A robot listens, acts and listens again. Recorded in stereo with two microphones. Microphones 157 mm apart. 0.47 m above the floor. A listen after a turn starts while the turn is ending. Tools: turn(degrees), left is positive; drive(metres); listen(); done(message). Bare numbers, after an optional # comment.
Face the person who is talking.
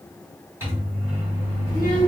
# The child speaking: about 20° left or 160° left.
turn(20)
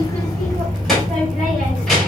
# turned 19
done("Found it: a child speaking, straight ahead.")